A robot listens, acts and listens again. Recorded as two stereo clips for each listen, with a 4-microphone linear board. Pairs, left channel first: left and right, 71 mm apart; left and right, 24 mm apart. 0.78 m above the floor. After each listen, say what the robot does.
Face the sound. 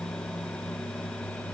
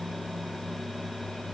Keep listening.
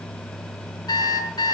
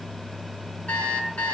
Turn 75° left.
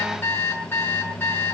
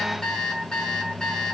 Turn 30° left.
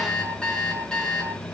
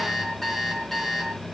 Turn 10° left.
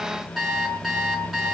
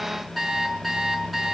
Found it: an alarm clock, straight ahead, over 4 m away.